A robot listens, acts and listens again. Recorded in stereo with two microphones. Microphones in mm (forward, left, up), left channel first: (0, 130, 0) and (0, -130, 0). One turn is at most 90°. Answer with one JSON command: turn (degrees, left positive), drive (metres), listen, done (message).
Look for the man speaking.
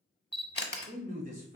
{"turn": -40}
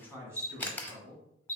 {"turn": -20}
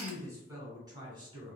{"turn": -20}
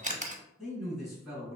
{"done": "Facing the man speaking."}